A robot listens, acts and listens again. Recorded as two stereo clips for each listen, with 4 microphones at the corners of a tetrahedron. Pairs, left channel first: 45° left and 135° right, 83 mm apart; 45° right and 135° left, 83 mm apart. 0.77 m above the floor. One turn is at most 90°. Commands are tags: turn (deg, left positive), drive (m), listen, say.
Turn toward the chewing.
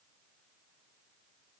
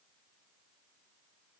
<listen/>
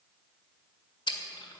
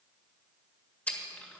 <turn deg="30"/>
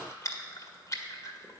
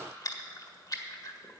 <say>Found it: chewing, straight ahead, 1 to 2 m away.</say>